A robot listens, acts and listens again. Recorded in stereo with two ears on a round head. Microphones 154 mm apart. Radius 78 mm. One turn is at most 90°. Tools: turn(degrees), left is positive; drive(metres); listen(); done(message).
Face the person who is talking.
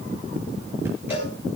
listen()
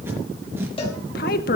turn(degrees=50)
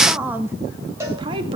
turn(degrees=-30)
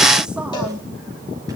listen()
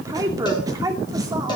turn(degrees=-20)
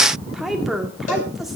done("Facing the woman speaking.")